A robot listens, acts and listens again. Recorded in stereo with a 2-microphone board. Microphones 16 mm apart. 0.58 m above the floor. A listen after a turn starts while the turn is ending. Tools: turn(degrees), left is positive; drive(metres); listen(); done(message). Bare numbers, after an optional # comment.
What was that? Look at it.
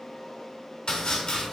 # The chopping: about 55° left or 125° left.
turn(55)
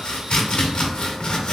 # So it is at 70° left.
turn(70)
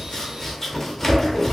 # The chopping is now 20° left.
turn(20)
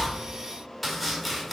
done("Facing the chopping, under 1 m away.")